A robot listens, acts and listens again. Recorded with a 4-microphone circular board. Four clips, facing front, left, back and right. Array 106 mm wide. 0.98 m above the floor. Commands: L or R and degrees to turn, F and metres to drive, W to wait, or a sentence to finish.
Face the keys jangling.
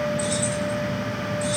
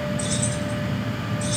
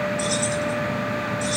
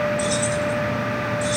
Facing the keys jangling, over 4 m away.